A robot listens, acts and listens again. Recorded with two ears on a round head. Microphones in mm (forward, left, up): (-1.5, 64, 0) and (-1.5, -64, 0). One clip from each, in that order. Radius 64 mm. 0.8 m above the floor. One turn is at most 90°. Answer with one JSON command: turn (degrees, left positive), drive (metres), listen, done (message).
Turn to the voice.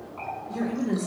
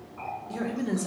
{"turn": -55}
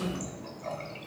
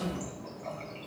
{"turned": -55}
{"listen": true}
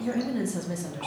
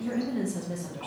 {"turn": 30}
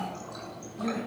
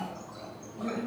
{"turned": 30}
{"turn": 35}
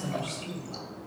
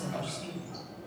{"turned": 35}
{"turn": 10}
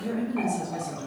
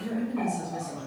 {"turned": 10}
{"done": "Facing the woman speaking, 2 to 4 m away."}